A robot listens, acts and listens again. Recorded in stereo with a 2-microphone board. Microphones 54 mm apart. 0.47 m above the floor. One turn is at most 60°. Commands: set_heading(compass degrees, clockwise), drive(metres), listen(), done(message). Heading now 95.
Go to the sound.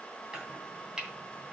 set_heading(125)
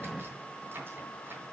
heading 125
set_heading(185)
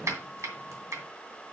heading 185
set_heading(245)
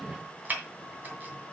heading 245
set_heading(280)
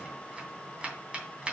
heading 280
set_heading(300)
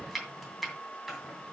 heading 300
drive(1.0)
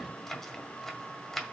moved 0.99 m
drive(1.0)
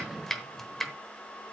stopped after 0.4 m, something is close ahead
done("Arrived at the chopping, straight ahead.")